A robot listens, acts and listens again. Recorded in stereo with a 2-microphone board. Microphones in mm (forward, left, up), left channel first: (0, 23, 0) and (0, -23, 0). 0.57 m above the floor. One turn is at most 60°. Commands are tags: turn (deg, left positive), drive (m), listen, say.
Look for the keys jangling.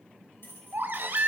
<turn deg="60"/>
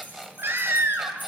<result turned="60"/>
<listen/>
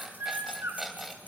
<turn deg="40"/>
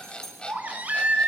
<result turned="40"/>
<turn deg="10"/>
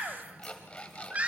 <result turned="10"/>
<listen/>
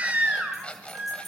<listen/>
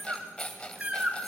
<say>Facing where the keys jangling came from. I can't hear it now.</say>